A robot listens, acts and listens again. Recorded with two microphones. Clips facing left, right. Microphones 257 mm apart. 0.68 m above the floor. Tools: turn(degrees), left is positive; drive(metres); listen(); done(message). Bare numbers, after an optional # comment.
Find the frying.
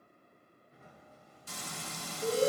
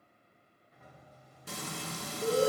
# The frying: about 65° right or 115° right.
turn(-65)
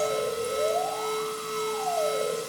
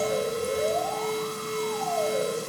# So it is at 50° right.
turn(-50)
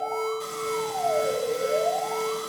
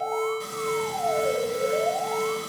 listen()
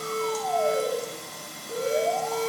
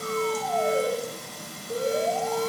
done("Found it: frying, straight ahead.")